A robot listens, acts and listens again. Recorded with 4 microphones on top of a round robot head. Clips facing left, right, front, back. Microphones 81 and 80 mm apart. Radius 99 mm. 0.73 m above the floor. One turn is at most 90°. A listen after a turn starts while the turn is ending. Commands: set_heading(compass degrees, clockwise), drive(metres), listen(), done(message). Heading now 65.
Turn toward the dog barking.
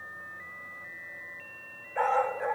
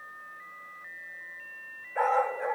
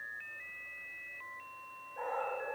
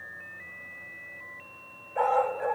set_heading(335)
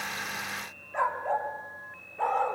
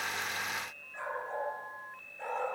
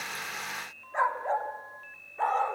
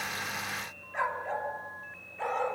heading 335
set_heading(290)
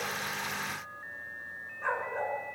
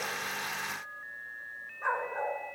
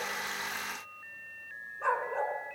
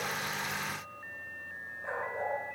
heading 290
set_heading(300)
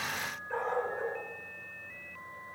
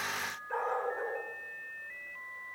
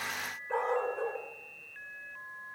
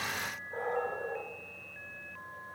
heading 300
set_heading(310)
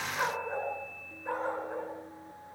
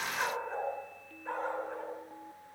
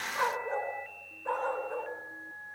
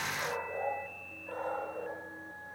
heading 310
done("Facing the dog barking, 2 to 4 m away.")